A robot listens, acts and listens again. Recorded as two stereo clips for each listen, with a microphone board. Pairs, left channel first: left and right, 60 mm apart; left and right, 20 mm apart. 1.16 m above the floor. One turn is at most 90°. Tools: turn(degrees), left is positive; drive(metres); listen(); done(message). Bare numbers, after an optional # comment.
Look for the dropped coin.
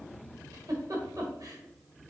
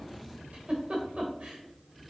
listen()
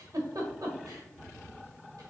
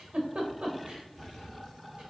listen()
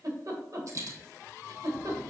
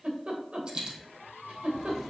# The dropped coin: about 55° right or 125° right.
turn(-55)
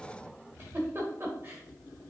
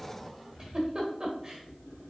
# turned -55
listen()
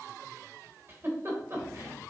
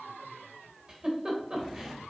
done("I heard a dropped coin, but can't make it out now. It was about straight ahead or 70° right.")